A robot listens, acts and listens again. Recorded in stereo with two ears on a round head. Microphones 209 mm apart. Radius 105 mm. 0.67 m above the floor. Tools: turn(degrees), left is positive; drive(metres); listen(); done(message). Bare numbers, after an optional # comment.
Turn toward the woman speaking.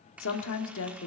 # The woman speaking: about 60° left or 120° left.
turn(60)
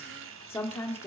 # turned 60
# So it is at 10° left.
turn(10)
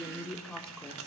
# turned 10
done("Facing the woman speaking.")